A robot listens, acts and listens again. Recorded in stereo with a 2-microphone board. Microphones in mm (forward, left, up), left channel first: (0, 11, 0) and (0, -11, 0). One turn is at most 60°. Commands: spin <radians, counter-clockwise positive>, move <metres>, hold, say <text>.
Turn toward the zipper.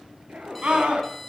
spin -1.05
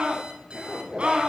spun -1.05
spin -0.44
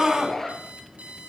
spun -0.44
spin 0.26
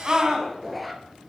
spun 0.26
say Facing the zipper, 1 to 2 m away.